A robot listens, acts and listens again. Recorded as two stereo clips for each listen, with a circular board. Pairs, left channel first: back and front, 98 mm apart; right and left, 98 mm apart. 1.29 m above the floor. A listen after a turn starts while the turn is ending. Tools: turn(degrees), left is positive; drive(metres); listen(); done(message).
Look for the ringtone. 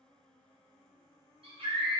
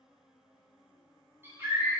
listen()
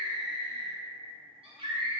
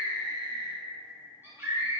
listen()
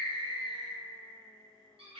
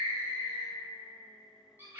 done("I can't make out a ringtone to turn to.")